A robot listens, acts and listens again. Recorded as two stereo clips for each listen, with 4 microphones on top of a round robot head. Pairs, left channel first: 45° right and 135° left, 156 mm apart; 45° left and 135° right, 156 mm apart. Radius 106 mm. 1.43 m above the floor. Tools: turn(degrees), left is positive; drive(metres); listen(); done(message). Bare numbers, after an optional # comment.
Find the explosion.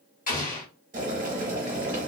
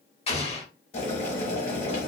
# The explosion: 10° right.
turn(-10)
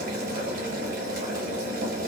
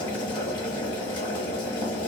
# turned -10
done("I heard an explosion from this way, but can't make it out now.")